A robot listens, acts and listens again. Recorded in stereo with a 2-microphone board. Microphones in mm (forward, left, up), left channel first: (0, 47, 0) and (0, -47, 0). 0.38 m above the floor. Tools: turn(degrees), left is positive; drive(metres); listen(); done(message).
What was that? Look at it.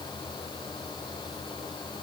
listen()
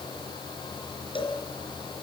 turn(degrees=65)
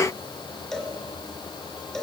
done("Found it: a cowbell, straight ahead, 2 to 4 m away.")